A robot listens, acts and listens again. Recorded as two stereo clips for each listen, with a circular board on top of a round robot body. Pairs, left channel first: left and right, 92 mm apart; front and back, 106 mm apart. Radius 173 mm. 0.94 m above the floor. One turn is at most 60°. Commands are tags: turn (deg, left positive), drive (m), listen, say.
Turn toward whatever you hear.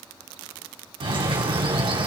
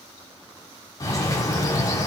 <turn deg="-60"/>
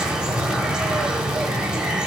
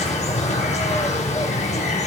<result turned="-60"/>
<say>Found it: a bird, straight ahead, over 4 m away.</say>